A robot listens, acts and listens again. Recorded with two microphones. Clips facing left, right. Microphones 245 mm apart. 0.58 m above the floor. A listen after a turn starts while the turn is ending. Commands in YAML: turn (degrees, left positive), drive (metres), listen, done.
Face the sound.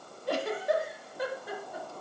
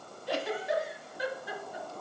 turn: 60
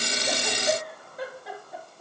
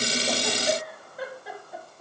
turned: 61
done: "Facing the giggle."